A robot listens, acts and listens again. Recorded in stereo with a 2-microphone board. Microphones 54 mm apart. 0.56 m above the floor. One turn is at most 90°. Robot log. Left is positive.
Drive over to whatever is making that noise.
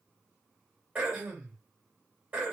note: The throat clearing: about 25° right or 155° right.
cmd yaw -25
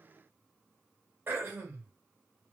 note: So it is at 125° right.
cmd yaw -90
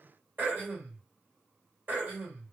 note: The throat clearing is now 35° right.
cmd yaw -35
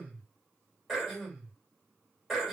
cmd fwd 1.0
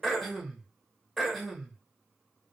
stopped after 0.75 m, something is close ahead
end: I am next to the throat clearing.